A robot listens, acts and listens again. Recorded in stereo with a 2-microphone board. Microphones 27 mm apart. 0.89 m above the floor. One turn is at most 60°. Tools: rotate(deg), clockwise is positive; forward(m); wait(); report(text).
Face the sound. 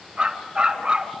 rotate(35)
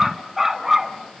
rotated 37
rotate(10)
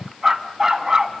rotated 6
rotate(20)
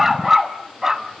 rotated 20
rotate(20)
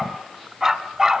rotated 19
rotate(20)
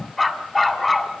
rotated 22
report("Found it: a dog barking, straight ahead, 2 to 4 m away.")